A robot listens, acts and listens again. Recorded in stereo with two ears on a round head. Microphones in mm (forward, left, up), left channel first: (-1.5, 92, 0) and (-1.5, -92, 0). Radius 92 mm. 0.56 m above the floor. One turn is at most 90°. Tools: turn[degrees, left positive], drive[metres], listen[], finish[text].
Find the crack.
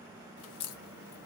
Action: turn[90]
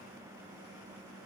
Action: finish[I heard a crack from this way, but can't make it out now.]